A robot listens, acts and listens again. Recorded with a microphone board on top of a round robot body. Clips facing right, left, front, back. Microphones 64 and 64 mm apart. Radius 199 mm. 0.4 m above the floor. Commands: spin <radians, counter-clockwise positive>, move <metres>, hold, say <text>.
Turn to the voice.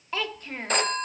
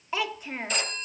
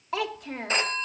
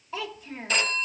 spin 0.17
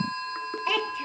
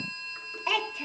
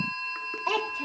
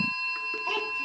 say Found it: a child speaking, straight ahead, 1 to 2 m away.